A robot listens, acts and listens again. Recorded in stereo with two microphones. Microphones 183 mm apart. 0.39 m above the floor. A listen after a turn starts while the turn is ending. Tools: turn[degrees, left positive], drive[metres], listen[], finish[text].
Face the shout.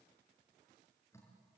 Action: listen[]
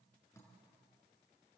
Action: listen[]
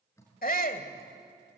Thought: The shout: about 55° left or 125° left.
Action: turn[55]
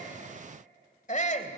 Thought: So it is at 55° left.
Action: turn[55]
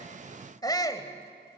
Thought: The shout is now 25° left.
Action: turn[25]
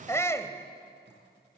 Thought: The shout is now 20° left.
Action: turn[20]
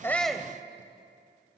Action: finish[Facing the shout.]